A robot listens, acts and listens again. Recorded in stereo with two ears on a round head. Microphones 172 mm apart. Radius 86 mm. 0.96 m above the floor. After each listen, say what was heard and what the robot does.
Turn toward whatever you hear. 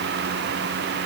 Keep listening.
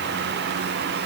Keep listening.
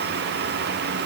I can't make out anything to turn to.